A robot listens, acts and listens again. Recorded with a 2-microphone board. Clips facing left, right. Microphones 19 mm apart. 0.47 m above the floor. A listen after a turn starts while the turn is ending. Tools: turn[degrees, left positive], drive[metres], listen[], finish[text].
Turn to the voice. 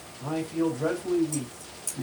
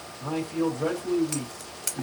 Action: turn[-30]
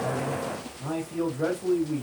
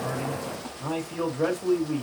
Thought: So it is at 145° right.
Action: turn[-145]
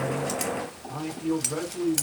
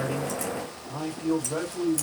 Thought: The man speaking is now 15° right.
Action: turn[-15]
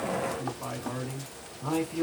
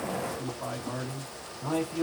Action: finish[Found it: a man speaking, straight ahead.]